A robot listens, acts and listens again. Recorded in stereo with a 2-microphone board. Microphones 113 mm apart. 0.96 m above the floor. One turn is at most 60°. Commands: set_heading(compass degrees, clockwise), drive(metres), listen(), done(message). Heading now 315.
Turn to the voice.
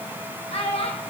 set_heading(255)
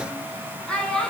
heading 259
done("Found it: a child speaking, straight ahead.")